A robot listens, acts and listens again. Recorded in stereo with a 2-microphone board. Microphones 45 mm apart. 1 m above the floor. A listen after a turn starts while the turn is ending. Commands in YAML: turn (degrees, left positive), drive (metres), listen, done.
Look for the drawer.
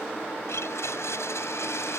listen: true
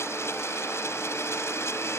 listen: true
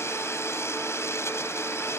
done: "I can't make out a drawer, only a blender."